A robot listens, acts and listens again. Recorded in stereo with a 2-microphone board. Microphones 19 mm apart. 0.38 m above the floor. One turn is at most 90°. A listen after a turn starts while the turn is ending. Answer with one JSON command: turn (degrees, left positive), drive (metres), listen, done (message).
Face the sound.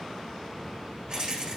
{"turn": -30}
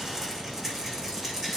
{"done": "Facing the rattle, over 4 m away."}